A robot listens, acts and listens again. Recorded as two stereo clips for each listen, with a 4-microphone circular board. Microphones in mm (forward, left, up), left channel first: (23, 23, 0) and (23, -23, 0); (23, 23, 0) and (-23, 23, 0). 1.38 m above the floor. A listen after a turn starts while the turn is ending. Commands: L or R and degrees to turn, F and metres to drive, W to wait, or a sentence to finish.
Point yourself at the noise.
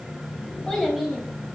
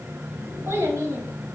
L170
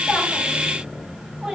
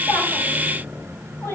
R10
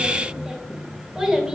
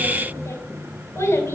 R10
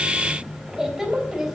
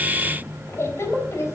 Found it: a child speaking, straight ahead, 2 to 4 m away.